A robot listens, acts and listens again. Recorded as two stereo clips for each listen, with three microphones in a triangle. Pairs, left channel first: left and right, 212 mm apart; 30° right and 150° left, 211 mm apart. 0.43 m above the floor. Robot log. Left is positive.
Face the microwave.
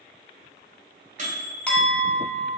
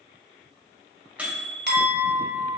note: The microwave: 125° right.
cmd yaw -125
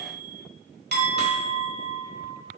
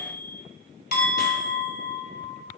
end: Facing the microwave, 1 to 2 m away.